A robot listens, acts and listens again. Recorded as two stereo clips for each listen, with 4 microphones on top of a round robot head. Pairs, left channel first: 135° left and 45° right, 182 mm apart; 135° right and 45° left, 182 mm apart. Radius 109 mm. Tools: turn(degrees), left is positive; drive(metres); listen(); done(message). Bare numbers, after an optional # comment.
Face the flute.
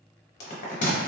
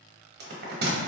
listen()
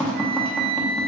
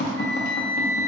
# The flute: 65° right.
turn(-65)
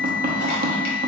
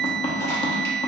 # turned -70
done("Found it: a flute, straight ahead, under 1 m away.")